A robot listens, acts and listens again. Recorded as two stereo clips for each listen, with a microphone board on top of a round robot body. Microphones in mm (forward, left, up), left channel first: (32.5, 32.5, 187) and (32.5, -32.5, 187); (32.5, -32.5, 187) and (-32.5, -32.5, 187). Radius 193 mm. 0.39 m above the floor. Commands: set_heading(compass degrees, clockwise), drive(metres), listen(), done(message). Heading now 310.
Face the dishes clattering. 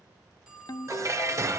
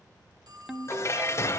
set_heading(355)
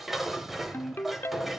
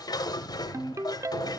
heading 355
done("Found it: dishes clattering, straight ahead.")